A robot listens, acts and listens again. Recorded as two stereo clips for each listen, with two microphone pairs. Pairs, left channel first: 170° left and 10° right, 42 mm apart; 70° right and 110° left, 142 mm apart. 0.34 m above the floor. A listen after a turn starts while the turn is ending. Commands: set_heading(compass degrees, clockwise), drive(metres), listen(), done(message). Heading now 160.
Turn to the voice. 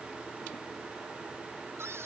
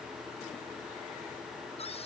listen()
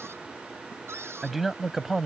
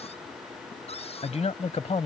set_heading(255)
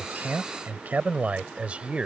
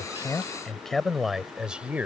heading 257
set_heading(222)
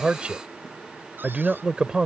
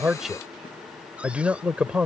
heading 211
set_heading(176)
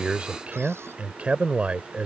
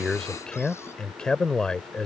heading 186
done("Facing the man speaking.")